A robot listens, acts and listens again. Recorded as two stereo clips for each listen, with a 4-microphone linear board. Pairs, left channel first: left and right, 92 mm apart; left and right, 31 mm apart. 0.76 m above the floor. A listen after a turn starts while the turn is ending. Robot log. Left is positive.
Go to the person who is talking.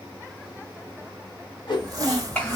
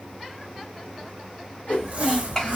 note: The child speaking: about 20° left or 160° left.
cmd yaw +20
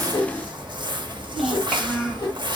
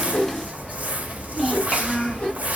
cmd fwd 1.0
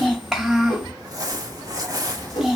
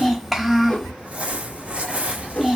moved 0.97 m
cmd fwd 1.0
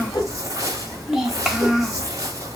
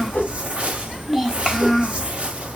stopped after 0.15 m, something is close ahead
end: Arrived at the child speaking, straight ahead.